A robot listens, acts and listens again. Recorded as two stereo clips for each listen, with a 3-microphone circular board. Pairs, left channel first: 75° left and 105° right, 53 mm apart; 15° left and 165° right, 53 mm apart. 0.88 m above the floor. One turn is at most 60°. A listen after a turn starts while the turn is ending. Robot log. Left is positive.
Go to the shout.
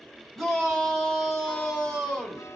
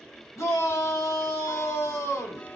note: The shout: 10° right.
cmd yaw -10
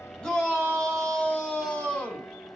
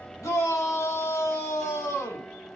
cmd fwd 1.0
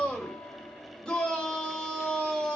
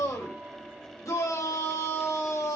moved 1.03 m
cmd fwd 1.0
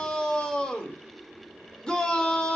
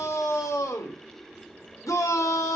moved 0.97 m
cmd fwd 1.0
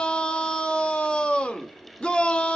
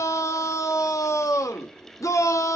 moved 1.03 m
cmd fwd 1.0
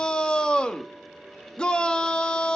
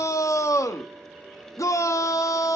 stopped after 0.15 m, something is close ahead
end: I am next to the shout.